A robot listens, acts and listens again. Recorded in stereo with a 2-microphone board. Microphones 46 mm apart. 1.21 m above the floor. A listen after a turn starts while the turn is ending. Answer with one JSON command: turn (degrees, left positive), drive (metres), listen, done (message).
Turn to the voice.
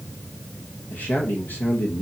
{"turn": 45}
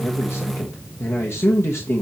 {"turn": 90}
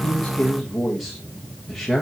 {"done": "Found it: a man speaking, straight ahead."}